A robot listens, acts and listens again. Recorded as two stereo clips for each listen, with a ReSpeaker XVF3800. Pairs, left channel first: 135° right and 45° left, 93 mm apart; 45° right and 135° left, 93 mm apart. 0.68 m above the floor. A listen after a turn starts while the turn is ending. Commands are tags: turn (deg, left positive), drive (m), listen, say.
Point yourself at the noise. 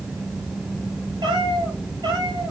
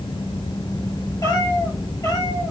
<say>Found it: a cat meowing, straight ahead.</say>